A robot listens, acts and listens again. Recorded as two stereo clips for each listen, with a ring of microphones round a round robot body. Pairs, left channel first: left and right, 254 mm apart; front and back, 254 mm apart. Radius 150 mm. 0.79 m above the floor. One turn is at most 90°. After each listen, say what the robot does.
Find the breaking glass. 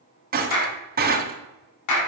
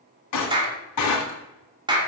Turn 35° right.
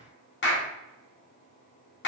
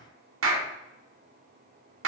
I heard breaking glass from this way, but can't make it out now.